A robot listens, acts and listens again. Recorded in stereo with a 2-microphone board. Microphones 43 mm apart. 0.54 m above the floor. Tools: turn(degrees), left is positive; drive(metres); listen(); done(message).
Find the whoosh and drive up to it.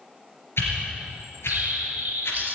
turn(degrees=75)
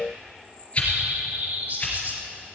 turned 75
turn(degrees=35)
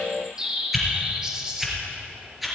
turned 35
drive(metres=1.0)
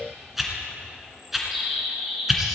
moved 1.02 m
drive(metres=1.0)
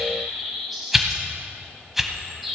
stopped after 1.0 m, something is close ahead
done("I am next to the whoosh.")